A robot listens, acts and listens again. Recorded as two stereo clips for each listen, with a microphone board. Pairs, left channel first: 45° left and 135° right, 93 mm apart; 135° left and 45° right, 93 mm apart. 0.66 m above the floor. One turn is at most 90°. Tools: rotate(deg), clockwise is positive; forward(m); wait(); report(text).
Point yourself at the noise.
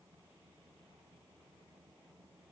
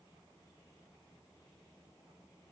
wait()
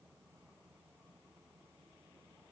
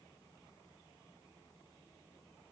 wait()
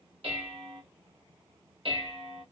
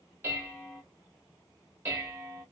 rotate(90)
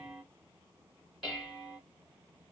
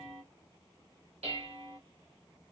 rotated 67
rotate(45)
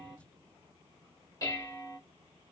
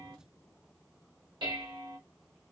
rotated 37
rotate(10)
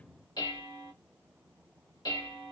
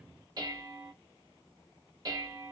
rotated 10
report("Found it: dishes clattering, straight ahead.")